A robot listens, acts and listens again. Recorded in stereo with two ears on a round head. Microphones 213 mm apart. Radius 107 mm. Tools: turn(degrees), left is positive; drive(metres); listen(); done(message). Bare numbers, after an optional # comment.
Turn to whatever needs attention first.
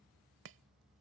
listen()
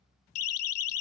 # The siren: about 65° left or 115° left.
turn(65)
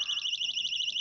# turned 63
done("Facing the siren.")